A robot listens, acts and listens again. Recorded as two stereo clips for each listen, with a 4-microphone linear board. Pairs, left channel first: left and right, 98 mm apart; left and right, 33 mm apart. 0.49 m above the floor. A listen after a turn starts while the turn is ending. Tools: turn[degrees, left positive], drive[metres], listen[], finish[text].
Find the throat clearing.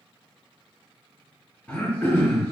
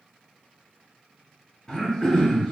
Thought: The throat clearing: about 15° left or 165° left.
Action: turn[15]
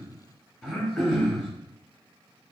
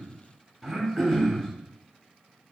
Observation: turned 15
Action: finish[Facing the throat clearing, 1 to 2 m away.]